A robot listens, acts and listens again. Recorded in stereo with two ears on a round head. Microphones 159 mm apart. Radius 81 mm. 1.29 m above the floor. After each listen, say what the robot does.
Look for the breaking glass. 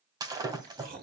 Turn 20° right.
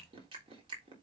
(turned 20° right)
Keep listening.
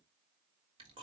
I heard breaking glass, but can't make it out now. It was about straight ahead or 140° right.